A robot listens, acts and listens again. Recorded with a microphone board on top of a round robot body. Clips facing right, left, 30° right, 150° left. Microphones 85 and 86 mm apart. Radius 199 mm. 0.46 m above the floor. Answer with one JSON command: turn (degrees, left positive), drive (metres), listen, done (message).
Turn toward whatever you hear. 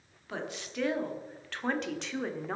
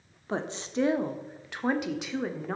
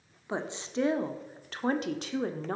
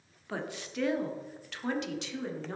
{"done": "Found it: a woman speaking, straight ahead."}